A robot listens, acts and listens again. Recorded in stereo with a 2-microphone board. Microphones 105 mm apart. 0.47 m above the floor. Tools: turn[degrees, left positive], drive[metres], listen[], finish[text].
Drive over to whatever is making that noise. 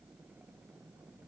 Action: listen[]
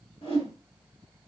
Thought: The whoosh: about 65° left or 115° left.
Action: turn[65]
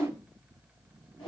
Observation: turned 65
Thought: So it is at 50° left.
Action: turn[50]
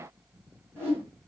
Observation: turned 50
Thought: The whoosh is now 20° right.
Action: turn[-20]
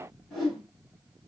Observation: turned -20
Action: drive[1.0]
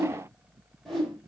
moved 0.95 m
Action: drive[1.0]
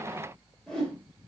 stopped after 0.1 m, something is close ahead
Thought: The whoosh is now 10° left.
Action: turn[10]
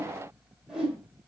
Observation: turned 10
Action: finish[I am next to the whoosh.]